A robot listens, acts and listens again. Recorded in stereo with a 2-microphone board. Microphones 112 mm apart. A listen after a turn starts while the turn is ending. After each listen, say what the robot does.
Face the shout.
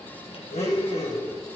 Keep listening.
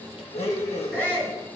Turn 15° left.
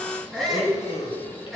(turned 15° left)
Found it: a shout, straight ahead.